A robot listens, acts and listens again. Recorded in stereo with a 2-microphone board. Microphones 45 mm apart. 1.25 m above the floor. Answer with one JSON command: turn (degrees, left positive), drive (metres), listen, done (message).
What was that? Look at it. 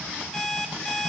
{"turn": 30}
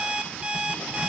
{"turn": -20}
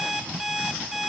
{"done": "Found it: an alarm clock, straight ahead."}